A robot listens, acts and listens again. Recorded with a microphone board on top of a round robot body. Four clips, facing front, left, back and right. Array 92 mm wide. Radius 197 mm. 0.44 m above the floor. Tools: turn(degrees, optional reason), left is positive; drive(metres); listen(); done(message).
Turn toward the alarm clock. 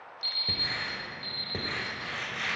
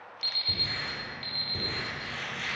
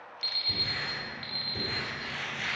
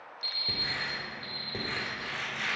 turn(degrees=140, reason="The alarm clock: 140° left.")
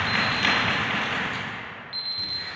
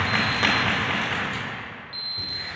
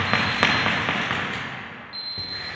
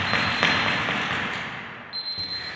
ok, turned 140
done("Found it: an alarm clock, straight ahead.")